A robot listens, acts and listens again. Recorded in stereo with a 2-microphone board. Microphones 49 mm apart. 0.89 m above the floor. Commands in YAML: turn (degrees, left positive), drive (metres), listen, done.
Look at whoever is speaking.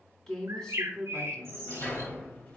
turn: 30
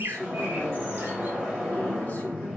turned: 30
listen: true
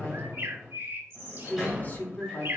turn: 135
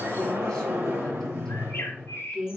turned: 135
turn: 10
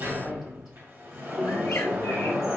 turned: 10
listen: true
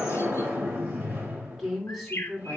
done: "Facing the woman speaking."